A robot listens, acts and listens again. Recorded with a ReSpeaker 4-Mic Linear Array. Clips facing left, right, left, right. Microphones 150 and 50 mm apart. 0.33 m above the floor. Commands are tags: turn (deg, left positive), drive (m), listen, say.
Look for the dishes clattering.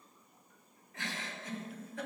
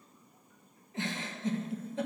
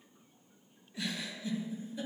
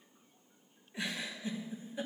<listen/>
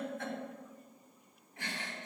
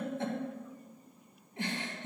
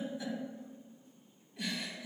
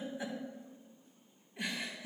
<listen/>
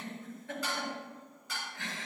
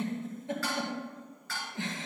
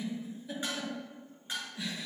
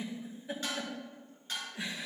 <turn deg="20"/>
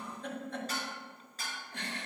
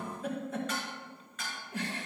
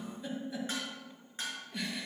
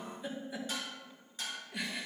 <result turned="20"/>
<turn deg="145"/>
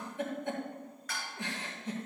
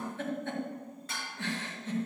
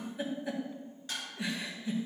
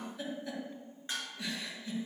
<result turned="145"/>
<turn deg="-25"/>
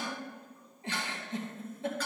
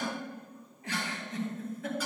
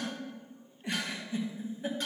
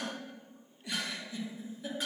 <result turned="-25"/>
<listen/>
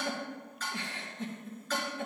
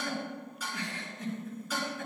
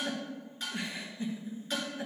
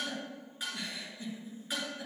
<turn deg="-10"/>
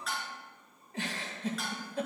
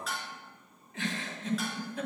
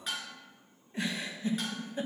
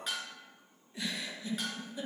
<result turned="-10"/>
<say>Found it: dishes clattering, straight ahead, 2 to 4 m away.</say>